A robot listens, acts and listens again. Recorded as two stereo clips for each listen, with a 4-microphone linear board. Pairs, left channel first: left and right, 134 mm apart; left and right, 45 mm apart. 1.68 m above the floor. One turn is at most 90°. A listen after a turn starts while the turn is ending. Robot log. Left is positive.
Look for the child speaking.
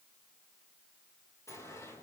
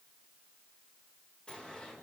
cmd idle
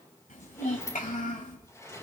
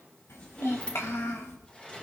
note: The child speaking: about 70° left or 110° left.
cmd yaw +70
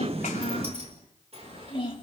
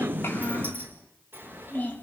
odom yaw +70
note: So it is at 40° left.
cmd yaw +40
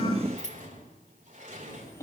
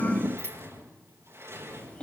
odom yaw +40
note: The child speaking is now 20° left.
cmd yaw +20
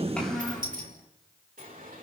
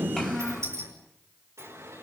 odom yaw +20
end: Found it: a child speaking, straight ahead, over 4 m away.